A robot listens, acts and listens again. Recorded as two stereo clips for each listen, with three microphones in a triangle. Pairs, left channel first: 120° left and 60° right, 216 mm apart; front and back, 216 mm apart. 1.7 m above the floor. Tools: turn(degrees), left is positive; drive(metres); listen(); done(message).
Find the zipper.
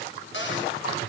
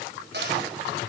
listen()
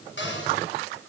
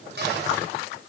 listen()
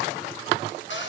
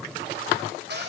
done("I can't make out a zipper to turn to.")